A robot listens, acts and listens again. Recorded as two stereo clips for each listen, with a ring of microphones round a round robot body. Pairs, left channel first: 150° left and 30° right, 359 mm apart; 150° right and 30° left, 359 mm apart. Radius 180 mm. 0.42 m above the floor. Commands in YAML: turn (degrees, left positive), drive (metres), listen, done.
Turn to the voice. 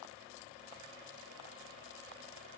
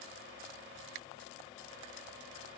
listen: true
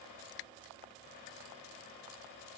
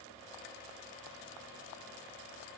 listen: true
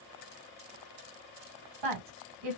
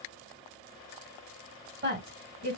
turn: -30
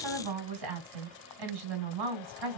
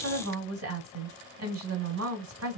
turn: -20
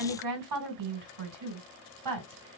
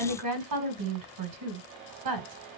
done: "Found it: a woman speaking, straight ahead."